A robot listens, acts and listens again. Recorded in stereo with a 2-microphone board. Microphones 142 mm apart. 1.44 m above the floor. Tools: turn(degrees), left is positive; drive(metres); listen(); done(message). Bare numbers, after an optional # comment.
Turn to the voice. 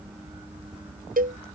listen()
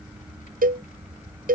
listen()
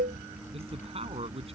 # The man speaking: about 45° right or 135° right.
turn(-45)
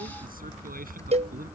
listen()
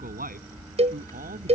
# So it is at 95° right.
turn(-95)
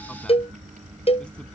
listen()
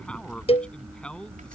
done("Facing the man speaking.")